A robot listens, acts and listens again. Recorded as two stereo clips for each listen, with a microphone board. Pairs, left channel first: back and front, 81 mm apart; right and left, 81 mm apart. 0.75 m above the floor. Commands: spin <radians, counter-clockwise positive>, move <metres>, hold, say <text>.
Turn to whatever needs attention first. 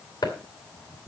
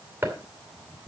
hold
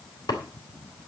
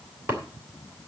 hold
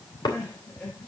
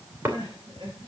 spin 1.83
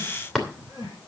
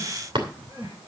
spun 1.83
spin 0.79
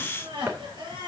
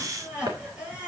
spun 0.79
spin 0.26
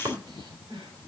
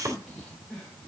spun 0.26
say Facing the crying.